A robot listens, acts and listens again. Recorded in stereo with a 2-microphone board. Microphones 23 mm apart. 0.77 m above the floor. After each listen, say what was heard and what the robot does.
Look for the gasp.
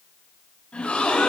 Turn 90° left.
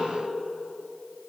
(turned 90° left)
I heard a gasp from this way, but can't make it out now.